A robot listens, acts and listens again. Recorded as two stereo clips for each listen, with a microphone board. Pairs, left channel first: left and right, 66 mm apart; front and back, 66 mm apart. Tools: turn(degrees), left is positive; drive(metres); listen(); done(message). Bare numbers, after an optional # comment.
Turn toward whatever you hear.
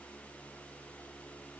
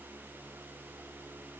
listen()
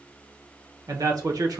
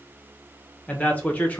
# The man speaking: 70° right.
turn(-70)
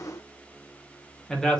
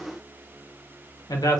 # The man speaking is now 10° left.
turn(10)
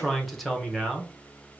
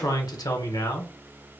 done("Facing the man speaking, under 1 m away.")